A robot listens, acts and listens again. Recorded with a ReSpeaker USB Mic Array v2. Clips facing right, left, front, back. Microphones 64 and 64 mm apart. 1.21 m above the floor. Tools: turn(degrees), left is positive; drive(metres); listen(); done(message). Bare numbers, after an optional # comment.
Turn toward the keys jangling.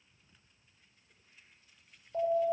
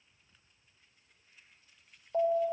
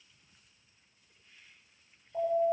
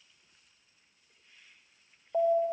listen()
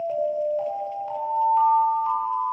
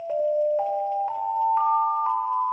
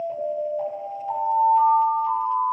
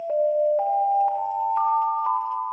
listen()
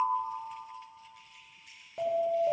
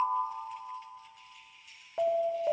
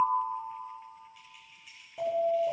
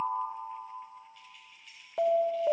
# The keys jangling: 80° right.
turn(-80)
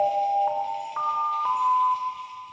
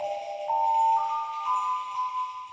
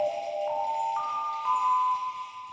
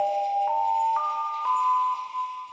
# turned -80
listen()
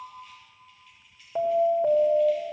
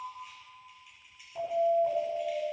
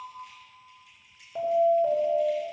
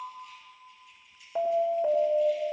# The keys jangling is now 10° left.
turn(10)
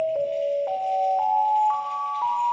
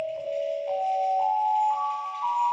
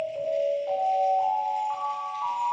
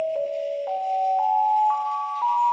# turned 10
listen()
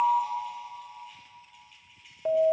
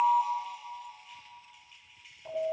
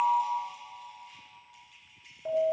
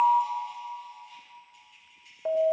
done("Facing the keys jangling.")